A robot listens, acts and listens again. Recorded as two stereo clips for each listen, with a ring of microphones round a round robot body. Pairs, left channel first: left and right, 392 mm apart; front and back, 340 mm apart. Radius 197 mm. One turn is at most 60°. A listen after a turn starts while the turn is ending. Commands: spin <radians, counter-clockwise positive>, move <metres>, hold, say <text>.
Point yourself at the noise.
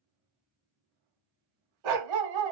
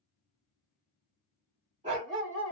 spin -1.05
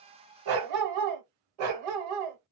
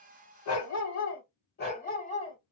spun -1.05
spin -1.05
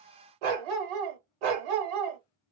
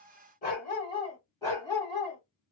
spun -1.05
spin -1.05
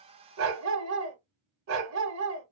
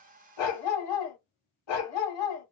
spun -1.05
spin -0.52
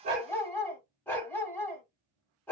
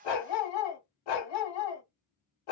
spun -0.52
say Found it: a dog barking, straight ahead.